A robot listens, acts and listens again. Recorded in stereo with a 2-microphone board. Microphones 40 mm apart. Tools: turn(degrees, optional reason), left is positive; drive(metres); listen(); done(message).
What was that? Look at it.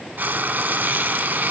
turn(degrees=-55, reason="The frying: about 55° right or 125° right.")
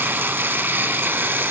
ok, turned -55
turn(degrees=-65, reason="So it is at 65° right.")
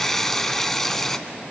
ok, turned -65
turn(degrees=10, reason="The frying is now 10° left.")
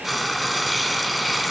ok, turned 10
done("Facing the frying.")